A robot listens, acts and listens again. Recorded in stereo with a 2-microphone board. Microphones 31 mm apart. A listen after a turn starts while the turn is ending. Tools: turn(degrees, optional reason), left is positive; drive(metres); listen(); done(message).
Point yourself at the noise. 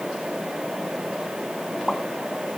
turn(degrees=30, reason="The pop: about 30° left or 150° left.")
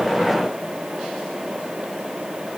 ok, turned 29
listen()
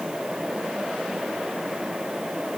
done("I heard a pop, but can't make it out now. It was about straight ahead or 125° left.")